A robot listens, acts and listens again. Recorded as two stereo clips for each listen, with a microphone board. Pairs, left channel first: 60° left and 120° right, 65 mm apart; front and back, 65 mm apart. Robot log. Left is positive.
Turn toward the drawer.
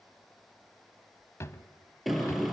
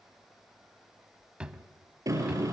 note: The drawer: 105° left.
cmd yaw +105
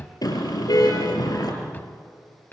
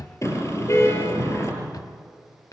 end: Found it: a drawer, straight ahead, under 1 m away.